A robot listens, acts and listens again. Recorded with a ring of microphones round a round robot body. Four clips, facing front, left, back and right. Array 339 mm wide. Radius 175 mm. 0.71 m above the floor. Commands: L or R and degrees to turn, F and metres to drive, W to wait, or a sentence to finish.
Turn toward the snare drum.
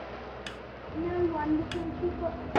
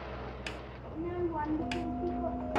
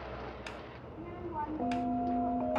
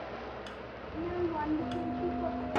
L55
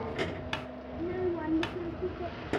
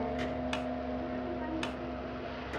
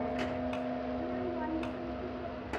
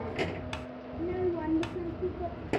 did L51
Facing the snare drum.